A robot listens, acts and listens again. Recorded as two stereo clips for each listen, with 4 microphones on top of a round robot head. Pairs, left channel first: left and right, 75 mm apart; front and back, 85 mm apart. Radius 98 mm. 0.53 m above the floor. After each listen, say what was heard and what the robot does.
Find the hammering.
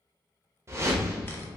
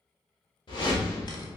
Keep listening.
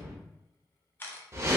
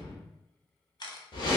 Keep listening.
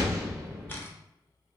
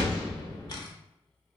I can't make out hammering to turn to.